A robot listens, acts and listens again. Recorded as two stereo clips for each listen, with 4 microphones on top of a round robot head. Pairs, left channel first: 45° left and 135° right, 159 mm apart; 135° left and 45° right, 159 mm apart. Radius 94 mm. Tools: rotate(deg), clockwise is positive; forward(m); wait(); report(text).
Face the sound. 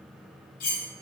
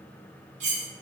report("Facing the cutlery clinking.")